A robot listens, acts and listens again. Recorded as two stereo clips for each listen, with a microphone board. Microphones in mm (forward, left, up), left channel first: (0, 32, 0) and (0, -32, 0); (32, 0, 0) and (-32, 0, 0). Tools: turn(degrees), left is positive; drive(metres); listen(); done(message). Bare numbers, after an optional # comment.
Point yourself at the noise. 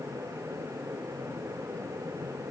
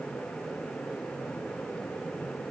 listen()
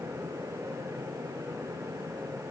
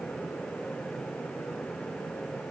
listen()
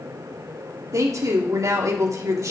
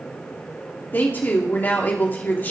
# The woman speaking: 60° right.
turn(-60)
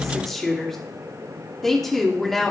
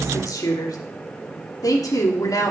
done("Facing the woman speaking.")